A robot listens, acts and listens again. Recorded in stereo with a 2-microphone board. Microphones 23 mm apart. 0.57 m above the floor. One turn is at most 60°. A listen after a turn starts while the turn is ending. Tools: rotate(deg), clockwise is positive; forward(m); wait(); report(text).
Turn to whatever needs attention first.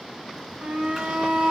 rotate(60)
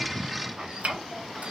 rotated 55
wait()
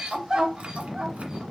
rotate(30)
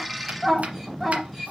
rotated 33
report("Facing the shout, 2 to 4 m away.")